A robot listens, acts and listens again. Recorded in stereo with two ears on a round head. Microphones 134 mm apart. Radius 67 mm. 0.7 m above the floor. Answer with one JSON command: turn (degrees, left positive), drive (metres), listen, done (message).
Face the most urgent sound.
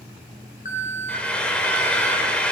{"turn": 50}
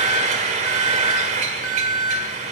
{"turn": 75}
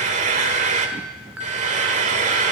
{"turn": -10}
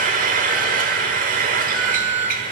{"done": "Facing the alarm."}